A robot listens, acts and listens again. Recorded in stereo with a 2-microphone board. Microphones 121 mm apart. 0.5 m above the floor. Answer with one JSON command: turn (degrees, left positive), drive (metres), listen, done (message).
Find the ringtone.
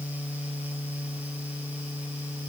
{"listen": true}
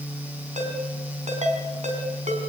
{"turn": -75}
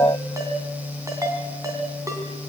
{"turn": -25}
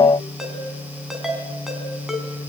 {"done": "Facing the ringtone, 2 to 4 m away."}